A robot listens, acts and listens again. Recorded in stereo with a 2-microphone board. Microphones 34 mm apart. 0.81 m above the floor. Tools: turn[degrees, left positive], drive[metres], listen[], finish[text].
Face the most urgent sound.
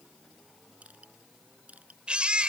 Thought: The baby crying: about 35° right or 145° right.
Action: turn[-35]
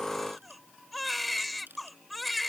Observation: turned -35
Action: finish[Facing the baby crying.]